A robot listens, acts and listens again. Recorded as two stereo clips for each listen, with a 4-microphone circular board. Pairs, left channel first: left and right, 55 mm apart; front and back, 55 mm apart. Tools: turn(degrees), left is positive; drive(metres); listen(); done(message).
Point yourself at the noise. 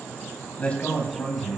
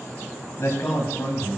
turn(degrees=35)
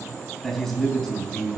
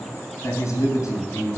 turn(degrees=15)
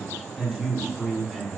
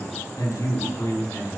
done("Facing the man speaking.")